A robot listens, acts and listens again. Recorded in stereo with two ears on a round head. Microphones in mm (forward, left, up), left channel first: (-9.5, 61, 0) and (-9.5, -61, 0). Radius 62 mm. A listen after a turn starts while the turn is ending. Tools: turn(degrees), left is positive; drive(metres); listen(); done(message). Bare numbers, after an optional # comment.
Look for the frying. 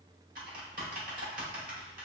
listen()
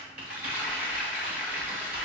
turn(-30)
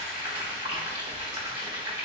# So it is at 135° right.
turn(-135)
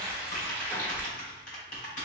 # The frying is now 20° left.
turn(20)
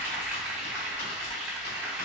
done("Found it: frying, straight ahead.")